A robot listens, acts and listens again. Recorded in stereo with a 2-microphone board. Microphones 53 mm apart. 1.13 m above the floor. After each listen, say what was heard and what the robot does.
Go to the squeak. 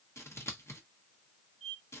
Turn 30° right.
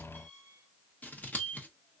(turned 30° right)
So it is at 145° right. Turn 145° right.
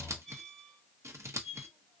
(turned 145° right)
Drive 1.0 m forward.
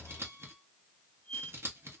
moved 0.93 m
Drive 1.0 m forward.
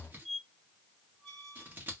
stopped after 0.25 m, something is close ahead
Arrived at the squeak, straight ahead.